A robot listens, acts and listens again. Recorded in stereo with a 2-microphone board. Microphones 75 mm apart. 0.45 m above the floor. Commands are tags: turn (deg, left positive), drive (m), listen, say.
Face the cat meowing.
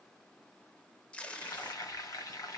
<listen/>
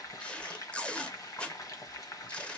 <listen/>
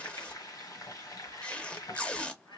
<turn deg="90"/>
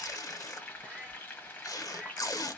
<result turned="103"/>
<turn deg="-15"/>
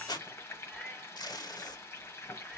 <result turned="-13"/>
<listen/>
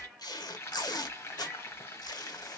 <say>Found it: a cat meowing, straight ahead, 2 to 4 m away.</say>